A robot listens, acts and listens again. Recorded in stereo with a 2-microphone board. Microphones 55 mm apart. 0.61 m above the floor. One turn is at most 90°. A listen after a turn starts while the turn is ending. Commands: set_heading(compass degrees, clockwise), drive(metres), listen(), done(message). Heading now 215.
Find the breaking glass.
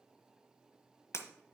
set_heading(155)
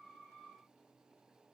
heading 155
listen()
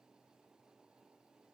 done("I heard breaking glass, but can't make it out now. It was about straight ahead or 60° left.")